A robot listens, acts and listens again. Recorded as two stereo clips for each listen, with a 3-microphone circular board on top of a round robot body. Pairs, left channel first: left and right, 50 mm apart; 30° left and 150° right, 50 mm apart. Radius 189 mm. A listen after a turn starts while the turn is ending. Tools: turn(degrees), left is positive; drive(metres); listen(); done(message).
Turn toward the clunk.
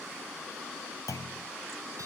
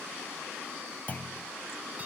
turn(degrees=90)
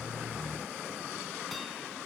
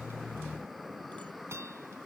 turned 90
done("Facing where the clunk came from. I can't hear it now.")